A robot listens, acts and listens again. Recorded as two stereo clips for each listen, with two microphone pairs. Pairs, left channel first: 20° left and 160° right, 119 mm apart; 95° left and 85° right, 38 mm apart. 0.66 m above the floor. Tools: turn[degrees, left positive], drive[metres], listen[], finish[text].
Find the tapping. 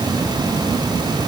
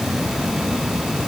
Action: listen[]
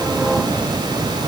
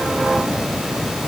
Action: listen[]
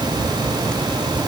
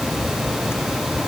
Action: finish[I can't make out tapping to turn to.]